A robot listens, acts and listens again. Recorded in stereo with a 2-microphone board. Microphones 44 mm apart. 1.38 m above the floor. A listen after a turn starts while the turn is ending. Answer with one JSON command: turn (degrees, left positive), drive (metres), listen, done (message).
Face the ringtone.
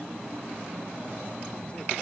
{"listen": true}
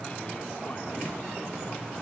{"listen": true}
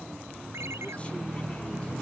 {"turn": -90}
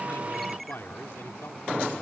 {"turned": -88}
{"done": "Found it: a ringtone, straight ahead."}